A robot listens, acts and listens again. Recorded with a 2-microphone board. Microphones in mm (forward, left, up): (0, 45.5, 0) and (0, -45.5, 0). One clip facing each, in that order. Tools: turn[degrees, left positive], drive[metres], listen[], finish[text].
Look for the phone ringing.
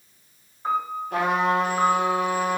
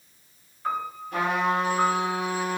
Action: listen[]
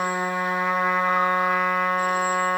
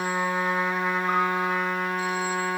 Action: listen[]
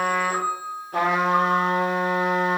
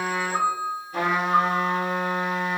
Action: finish[I can't make out a phone ringing, only a trumpet and a piano.]